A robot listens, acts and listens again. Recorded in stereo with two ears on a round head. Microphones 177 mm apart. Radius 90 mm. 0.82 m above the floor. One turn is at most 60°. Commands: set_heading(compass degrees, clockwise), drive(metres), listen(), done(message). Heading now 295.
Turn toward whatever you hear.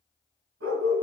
set_heading(355)
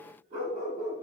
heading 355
set_heading(35)
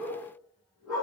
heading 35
done("Facing the dog barking.")